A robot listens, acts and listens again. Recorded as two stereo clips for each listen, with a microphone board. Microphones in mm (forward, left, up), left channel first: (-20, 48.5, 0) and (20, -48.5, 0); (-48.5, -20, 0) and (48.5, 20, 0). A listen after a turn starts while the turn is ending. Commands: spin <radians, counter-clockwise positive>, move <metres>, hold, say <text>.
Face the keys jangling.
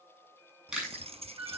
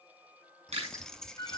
spin -1.31
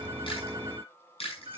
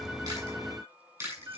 hold
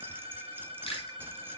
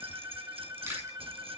hold
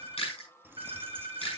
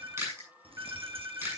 say Facing the keys jangling, under 1 m away.